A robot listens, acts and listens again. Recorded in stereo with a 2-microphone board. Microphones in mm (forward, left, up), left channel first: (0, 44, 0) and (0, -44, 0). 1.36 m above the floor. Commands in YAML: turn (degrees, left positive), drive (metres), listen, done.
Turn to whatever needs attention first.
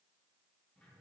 listen: true
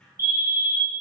turn: -30
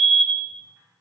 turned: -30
turn: -120
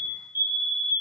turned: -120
turn: -30
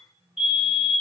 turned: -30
done: "Found it: a fire alarm, straight ahead."